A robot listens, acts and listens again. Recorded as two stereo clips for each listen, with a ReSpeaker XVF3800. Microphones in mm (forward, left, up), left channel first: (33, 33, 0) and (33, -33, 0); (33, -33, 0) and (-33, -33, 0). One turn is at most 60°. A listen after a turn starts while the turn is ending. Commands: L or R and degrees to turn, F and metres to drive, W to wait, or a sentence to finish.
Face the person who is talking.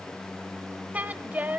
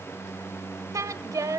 R60
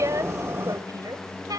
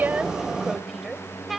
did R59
R60
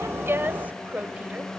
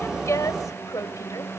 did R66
R25
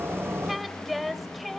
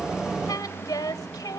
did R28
Found it: a woman speaking, straight ahead, 1 to 2 m away.